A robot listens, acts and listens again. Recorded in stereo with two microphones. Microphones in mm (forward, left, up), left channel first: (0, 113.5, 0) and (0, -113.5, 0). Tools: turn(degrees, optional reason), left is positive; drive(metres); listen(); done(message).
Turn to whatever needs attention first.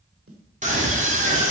turn(degrees=-35, reason="The scream: about 35° right or 145° right.")
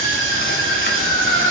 turn(degrees=-110, reason="So it is at 110° right.")
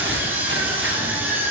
turn(degrees=-10, reason="The scream is now 10° right.")
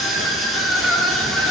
done("Facing the scream.")